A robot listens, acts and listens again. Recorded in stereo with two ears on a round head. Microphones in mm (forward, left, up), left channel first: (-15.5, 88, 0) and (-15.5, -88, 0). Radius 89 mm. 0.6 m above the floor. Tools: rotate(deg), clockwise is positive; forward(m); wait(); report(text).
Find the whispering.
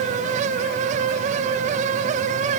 wait()
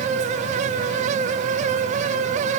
wait()
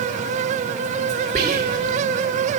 rotate(35)
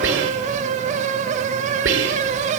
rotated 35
rotate(105)
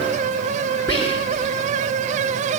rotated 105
rotate(-10)
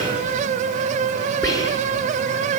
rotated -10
report("Facing the whispering.")